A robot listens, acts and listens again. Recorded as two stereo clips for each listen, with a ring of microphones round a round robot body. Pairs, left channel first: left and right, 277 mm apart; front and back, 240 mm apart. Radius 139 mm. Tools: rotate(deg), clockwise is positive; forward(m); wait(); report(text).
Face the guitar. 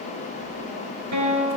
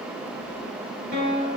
rotate(120)
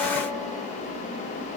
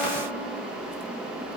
wait()
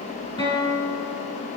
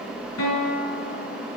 rotate(-15)
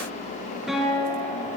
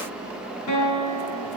report("Facing the guitar, over 4 m away.")